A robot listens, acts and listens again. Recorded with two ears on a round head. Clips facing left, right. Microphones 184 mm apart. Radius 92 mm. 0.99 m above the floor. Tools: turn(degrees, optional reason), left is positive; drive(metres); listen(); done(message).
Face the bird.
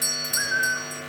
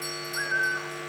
turn(degrees=35, reason="The bird: about 35° left or 145° left.")
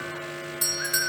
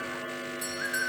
done("Facing the bird, 1 to 2 m away.")